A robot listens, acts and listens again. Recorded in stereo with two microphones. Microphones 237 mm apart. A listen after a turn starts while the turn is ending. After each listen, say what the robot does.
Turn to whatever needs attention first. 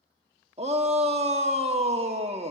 Turn 25° right.
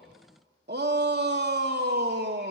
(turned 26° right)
Turn 120° right.
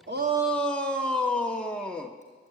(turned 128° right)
Facing the shout.